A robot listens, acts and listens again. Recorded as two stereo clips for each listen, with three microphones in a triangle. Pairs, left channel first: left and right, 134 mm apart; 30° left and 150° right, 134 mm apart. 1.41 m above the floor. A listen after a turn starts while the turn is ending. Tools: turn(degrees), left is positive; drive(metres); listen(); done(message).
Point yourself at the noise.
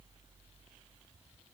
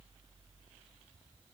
listen()
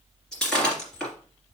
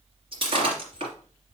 turn(degrees=175)
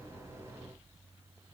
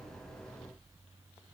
done("Facing where the breaking glass came from. I can't hear it now.")